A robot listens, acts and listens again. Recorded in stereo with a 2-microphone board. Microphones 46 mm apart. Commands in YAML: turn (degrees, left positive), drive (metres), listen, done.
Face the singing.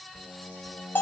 turn: 55
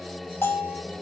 done: "Facing the singing, 1 to 2 m away."